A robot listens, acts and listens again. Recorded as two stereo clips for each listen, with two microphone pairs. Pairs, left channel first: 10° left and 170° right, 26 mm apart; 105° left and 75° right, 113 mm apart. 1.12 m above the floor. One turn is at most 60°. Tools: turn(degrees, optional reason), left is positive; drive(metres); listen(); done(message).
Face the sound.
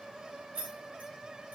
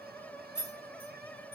turn(degrees=60, reason="The keys jangling: 175° left.")
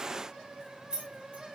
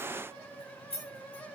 turn(degrees=60, reason="The keys jangling is now 140° left.")
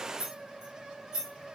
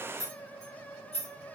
turn(degrees=60, reason="The keys jangling is now 125° left.")
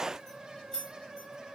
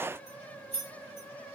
turn(degrees=60, reason="The keys jangling is now 80° left.")
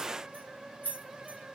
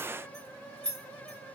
turn(degrees=25, reason="The keys jangling is now 25° left.")
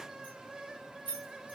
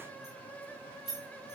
turn(degrees=10, reason="The keys jangling is now 10° left.")
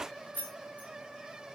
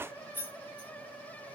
done("Facing the keys jangling.")